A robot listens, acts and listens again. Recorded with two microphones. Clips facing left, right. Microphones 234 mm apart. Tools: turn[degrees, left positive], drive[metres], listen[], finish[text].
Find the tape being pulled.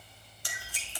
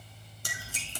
Thought: The tape being pulled: about 45° right or 135° right.
Action: turn[-45]
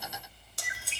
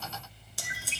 Action: finish[Facing the tape being pulled, 1 to 2 m away.]